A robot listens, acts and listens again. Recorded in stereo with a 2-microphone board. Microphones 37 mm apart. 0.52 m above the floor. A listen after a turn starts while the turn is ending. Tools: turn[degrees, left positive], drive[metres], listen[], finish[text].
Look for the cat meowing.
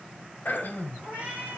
Thought: The cat meowing: about 30° right or 150° right.
Action: turn[-30]
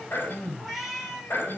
Action: finish[Facing the cat meowing.]